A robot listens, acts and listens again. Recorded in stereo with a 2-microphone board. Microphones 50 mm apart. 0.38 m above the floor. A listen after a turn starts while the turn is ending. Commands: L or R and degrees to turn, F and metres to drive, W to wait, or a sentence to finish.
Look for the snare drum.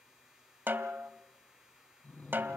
R40
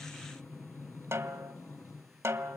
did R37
R95
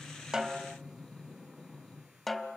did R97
Facing the snare drum.